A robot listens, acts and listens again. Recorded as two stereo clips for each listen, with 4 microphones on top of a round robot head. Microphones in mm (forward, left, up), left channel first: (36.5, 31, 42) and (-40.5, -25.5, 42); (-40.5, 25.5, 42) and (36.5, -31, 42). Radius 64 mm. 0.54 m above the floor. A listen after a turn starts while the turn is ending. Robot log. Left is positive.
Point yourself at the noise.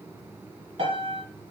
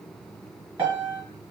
note: The piano: 110° right.
cmd yaw -110
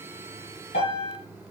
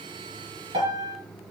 end: Found it: a piano, straight ahead, 1 to 2 m away.